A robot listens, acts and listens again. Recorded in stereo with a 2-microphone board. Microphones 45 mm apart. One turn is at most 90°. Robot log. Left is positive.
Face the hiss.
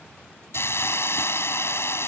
note: The hiss: about 70° left or 110° left.
cmd yaw +70
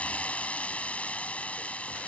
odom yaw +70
note: So it is at 30° left.
cmd yaw +30
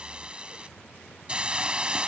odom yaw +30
note: The hiss is now 25° right.
cmd yaw -25
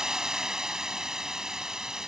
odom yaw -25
note: The hiss is now 15° right.
cmd yaw -15
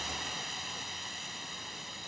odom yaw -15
end: Facing the hiss.